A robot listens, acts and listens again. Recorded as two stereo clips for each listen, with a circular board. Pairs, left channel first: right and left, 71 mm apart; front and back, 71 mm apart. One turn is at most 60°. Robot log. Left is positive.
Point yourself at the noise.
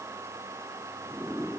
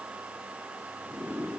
cmd idle
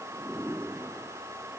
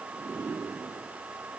cmd idle
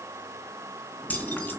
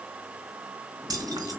note: The keys jangling: 155° right.
cmd yaw -60
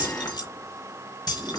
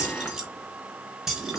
note: The keys jangling is now 95° right.
cmd yaw -60
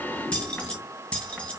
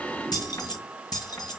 note: The keys jangling is now 15° right.
cmd yaw -15
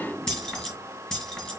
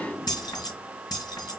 end: Found it: keys jangling, straight ahead.